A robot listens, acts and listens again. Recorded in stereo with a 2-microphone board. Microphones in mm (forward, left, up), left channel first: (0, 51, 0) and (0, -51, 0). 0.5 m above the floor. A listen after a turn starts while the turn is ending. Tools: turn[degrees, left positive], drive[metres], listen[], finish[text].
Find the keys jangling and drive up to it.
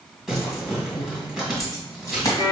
Thought: The keys jangling: about 35° left or 145° left.
Action: turn[35]
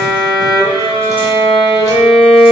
Action: listen[]
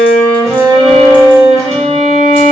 Action: listen[]
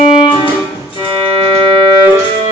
Action: finish[I heard keys jangling, but can't make it out now. It was about straight ahead or 110° left. I did not reach it.]